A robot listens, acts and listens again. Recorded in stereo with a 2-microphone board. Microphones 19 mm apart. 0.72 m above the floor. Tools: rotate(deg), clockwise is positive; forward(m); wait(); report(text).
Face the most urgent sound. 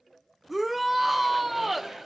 rotate(30)
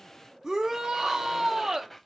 rotate(140)
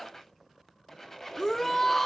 rotate(-15)
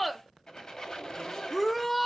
report("Found it: a shout, straight ahead, under 1 m away.")